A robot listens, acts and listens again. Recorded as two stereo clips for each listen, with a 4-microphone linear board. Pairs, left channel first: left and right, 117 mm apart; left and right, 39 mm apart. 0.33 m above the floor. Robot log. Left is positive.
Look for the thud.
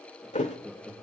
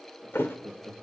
note: The thud: about 75° left or 105° left.
cmd yaw +75
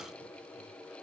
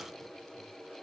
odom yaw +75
cmd idle
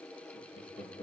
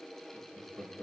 end: I heard a thud, but can't make it out now. It was about straight ahead or 30° left.